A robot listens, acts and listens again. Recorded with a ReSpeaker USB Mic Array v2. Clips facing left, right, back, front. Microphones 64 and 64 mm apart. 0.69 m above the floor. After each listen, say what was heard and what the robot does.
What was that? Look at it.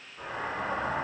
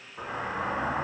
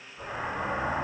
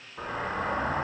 The explosion: 40° right. Turn 40° right.
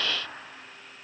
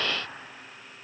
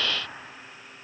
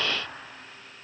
I heard an explosion from this way, but can't make it out now.